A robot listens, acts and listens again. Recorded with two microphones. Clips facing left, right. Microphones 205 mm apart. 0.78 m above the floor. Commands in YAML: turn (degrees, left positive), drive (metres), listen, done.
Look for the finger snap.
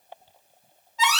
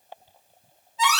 listen: true
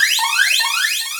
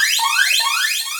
listen: true
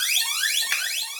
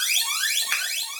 turn: 20
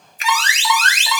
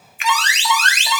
turn: 135
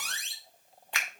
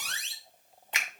turn: -25
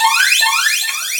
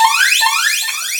listen: true
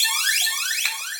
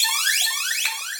listen: true
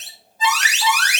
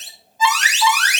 done: "Facing where the finger snap came from. I can't hear it now."